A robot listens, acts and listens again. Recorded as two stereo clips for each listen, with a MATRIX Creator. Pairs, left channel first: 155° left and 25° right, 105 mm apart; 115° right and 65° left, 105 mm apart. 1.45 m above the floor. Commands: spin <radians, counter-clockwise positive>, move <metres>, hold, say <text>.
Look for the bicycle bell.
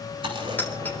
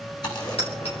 spin -2.27
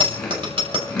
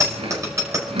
spin 0.17
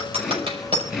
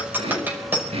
say Found it: a bicycle bell, straight ahead, over 4 m away.